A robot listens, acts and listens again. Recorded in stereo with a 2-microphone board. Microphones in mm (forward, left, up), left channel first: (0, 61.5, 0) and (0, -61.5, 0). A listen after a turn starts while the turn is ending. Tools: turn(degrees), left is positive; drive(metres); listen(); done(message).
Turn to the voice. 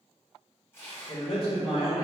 turn(degrees=40)
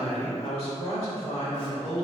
turn(degrees=85)
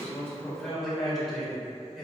done("Facing the man speaking.")